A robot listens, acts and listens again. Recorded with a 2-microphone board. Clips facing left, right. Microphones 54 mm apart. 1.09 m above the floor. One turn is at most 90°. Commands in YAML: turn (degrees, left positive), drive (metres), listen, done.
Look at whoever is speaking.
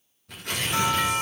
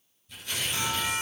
listen: true
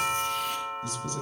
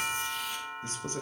turn: -40
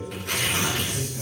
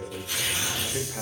turn: -90
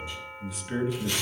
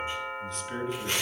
done: "Found it: a man speaking, straight ahead, 1 to 2 m away."